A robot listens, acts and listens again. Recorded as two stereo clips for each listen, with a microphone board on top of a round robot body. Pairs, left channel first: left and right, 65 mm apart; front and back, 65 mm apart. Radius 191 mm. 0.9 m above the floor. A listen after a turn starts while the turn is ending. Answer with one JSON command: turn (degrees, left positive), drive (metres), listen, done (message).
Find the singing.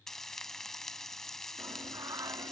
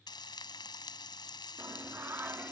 {"turn": -120}
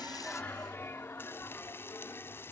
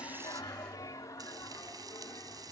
{"turn": 40}
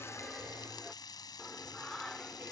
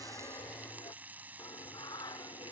{"turn": 10}
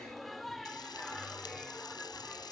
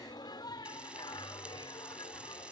{"done": "Found it: singing, straight ahead."}